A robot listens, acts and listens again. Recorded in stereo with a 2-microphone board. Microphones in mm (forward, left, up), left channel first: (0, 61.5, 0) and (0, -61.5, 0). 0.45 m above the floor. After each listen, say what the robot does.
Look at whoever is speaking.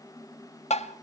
Keep listening.
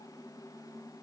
Keep listening.
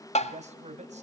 Turn 65° right.
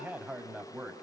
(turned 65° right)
Turn 15° right.
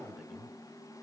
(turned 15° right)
Found it: a man speaking, straight ahead.